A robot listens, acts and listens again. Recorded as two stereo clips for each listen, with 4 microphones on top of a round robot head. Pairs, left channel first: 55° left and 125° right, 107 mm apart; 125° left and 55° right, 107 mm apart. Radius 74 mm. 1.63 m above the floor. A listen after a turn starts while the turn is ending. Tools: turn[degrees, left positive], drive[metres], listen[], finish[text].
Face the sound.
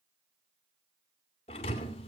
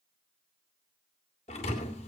Thought: The thud: 90° left.
Action: turn[90]
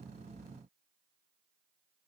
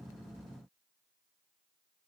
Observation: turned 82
Thought: Nothing new. It was at 10° left.
Action: turn[10]
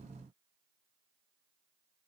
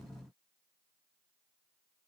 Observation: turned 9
Action: finish[Facing where the thud came from. I can't hear it now.]